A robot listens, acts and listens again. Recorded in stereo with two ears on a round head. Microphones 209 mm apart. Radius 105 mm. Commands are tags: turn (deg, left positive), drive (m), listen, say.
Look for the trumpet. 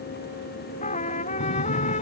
<turn deg="30"/>
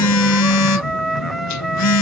<say>Found it: a trumpet, straight ahead.</say>